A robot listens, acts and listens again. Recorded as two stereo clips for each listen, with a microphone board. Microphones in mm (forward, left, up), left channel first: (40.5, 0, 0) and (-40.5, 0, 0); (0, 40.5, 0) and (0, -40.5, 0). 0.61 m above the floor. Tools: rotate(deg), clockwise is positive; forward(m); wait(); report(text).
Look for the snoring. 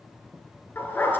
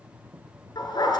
wait()
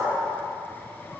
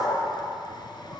wait()
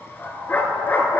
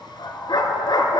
report("I can't make out snoring, only a dog barking.")